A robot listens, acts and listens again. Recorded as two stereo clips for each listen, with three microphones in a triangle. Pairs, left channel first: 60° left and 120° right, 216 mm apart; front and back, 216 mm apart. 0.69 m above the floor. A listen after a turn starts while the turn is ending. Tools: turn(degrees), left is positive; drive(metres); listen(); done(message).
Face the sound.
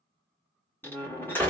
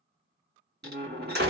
turn(degrees=140)
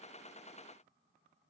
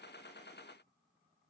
done("Facing where the door slam came from. I can't hear it now.")